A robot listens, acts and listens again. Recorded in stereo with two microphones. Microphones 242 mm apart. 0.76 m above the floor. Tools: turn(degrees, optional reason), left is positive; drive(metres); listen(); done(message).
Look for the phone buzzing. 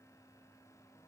listen()
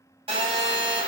turn(degrees=-20, reason="The phone buzzing: about 20° right or 160° right.")
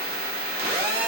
turn(degrees=-135, reason="So it is at 135° right.")
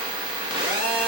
turn(degrees=-20, reason="The phone buzzing is now 20° right.")
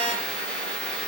done("Found it: a phone buzzing, straight ahead, 1 to 2 m away.")